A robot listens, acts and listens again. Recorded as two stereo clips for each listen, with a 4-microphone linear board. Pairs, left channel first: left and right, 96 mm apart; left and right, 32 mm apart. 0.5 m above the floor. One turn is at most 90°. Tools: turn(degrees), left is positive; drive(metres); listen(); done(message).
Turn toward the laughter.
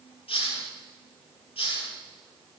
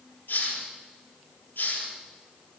listen()
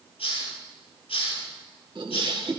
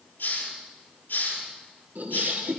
turn(degrees=-70)
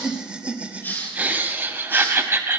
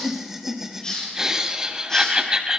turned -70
turn(degrees=-25)
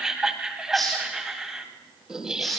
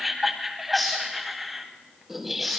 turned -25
done("Facing the laughter.")